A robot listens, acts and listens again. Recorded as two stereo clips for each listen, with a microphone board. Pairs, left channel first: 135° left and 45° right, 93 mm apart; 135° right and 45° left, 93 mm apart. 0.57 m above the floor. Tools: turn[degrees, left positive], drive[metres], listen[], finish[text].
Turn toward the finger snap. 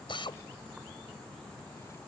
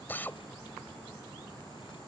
Action: listen[]
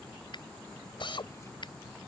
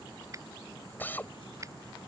Thought: The finger snap: 100° left.
Action: turn[100]
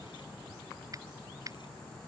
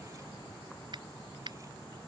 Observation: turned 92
Action: finish[Facing the finger snap.]